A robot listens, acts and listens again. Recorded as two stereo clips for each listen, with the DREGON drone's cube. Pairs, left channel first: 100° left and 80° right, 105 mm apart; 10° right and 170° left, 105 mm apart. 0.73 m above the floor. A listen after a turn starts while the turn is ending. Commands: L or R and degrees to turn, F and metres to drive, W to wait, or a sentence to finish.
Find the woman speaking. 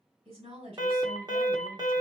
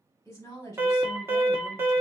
R70
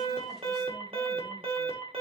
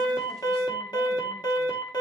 W
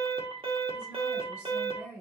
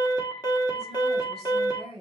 Facing the woman speaking, 2 to 4 m away.